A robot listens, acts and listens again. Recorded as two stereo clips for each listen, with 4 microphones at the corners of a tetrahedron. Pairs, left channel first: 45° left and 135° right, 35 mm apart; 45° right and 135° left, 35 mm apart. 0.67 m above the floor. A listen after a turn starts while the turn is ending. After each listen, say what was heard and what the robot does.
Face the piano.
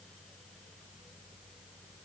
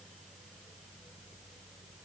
Keep listening.
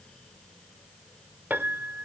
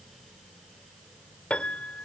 The piano: 105° right. Turn 105° right.
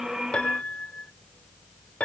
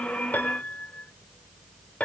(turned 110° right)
Facing the piano.